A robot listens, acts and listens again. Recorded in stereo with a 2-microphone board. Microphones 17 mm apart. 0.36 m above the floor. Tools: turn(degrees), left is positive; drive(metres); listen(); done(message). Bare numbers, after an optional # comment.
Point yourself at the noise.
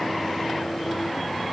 listen()
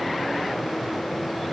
listen()
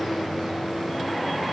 done("I can't make out anything to turn to.")